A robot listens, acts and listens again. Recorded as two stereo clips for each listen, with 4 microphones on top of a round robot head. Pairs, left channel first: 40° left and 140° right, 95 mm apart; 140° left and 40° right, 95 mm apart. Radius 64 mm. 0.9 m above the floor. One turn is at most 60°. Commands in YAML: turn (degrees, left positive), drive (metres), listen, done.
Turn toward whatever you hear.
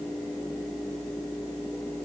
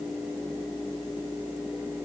listen: true
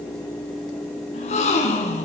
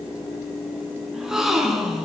turn: 45
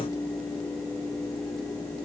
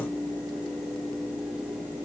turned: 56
turn: -10
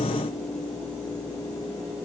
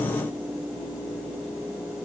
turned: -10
done: "I heard a gasp from this way, but can't make it out now."